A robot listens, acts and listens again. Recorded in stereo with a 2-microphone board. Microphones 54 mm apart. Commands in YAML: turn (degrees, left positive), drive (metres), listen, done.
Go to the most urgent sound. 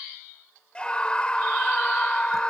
turn: 20
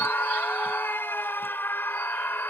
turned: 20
turn: 135
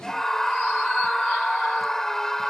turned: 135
turn: 10
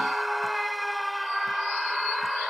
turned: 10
drive: 1.0
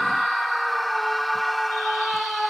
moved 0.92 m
drive: 1.0
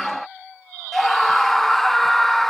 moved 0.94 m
drive: 1.0
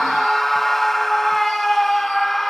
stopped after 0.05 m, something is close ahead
done: "I am next to the scream."